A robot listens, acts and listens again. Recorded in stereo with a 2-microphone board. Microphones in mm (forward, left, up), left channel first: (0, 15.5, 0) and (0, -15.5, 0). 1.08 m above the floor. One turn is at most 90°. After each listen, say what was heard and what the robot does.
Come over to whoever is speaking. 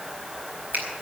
Keep listening.
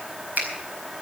Keep listening.
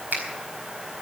I can't make out anyone speaking, only a finger snap.